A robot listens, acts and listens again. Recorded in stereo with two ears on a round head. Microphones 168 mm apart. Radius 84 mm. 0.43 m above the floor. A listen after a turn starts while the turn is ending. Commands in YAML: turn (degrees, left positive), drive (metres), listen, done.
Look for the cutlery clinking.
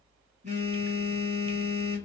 listen: true
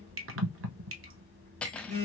turn: 30
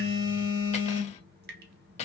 turn: 140
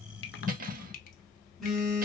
turn: -50
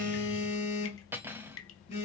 turn: -15
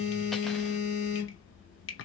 listen: true
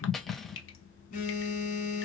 done: "Facing the cutlery clinking, under 1 m away."